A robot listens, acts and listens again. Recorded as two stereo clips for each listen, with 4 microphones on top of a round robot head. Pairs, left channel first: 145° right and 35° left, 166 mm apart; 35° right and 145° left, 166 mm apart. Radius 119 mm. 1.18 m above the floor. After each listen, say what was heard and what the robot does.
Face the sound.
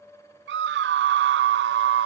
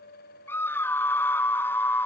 The scream: 40° left. Turn 40° left.
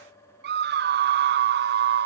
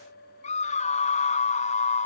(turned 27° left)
The scream is now 15° left. Turn 15° left.
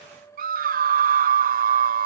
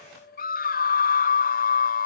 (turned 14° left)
Facing the scream.